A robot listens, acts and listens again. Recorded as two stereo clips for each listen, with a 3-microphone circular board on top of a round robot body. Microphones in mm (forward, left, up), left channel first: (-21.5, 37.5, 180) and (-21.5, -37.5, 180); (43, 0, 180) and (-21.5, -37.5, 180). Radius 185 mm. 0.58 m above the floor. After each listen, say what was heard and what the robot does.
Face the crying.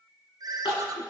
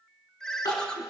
The crying: 70° left. Turn 70° left.
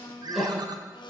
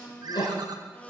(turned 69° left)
Facing the crying, 2 to 4 m away.